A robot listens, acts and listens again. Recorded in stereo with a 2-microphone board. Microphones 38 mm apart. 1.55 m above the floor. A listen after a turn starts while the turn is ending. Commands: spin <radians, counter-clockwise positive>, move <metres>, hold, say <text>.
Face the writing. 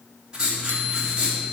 spin -0.35
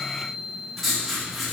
say Found it: writing, straight ahead.